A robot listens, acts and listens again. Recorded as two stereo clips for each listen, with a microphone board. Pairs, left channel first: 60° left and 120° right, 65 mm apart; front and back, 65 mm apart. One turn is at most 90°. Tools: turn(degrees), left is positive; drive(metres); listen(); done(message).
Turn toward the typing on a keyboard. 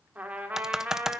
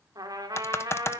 turn(degrees=-40)
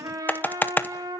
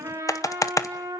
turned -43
done("Facing the typing on a keyboard.")